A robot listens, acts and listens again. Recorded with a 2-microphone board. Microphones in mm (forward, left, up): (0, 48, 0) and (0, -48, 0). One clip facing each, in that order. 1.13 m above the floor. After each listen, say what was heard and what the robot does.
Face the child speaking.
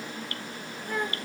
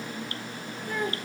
The child speaking: about 60° right or 120° right. Turn 60° right.
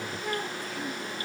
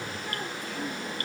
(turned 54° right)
Facing the child speaking, over 4 m away.